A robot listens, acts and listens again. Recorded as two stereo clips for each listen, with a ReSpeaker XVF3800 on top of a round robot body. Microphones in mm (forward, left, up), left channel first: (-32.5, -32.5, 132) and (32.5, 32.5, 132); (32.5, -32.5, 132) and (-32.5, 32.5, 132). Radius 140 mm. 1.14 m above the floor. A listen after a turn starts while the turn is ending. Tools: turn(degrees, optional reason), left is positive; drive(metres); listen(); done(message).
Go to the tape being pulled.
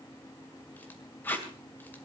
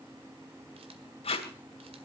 turn(degrees=-65, reason="The tape being pulled: 65° right.")
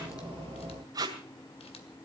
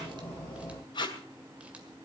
drive(metres=1.0)
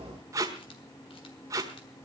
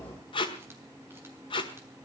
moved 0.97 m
turn(degrees=-10, reason="The tape being pulled is now 10° right.")
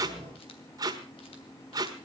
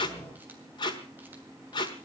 drive(metres=1.0)
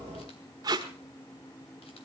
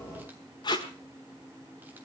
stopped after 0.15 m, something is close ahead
done("Arrived at the tape being pulled, straight ahead.")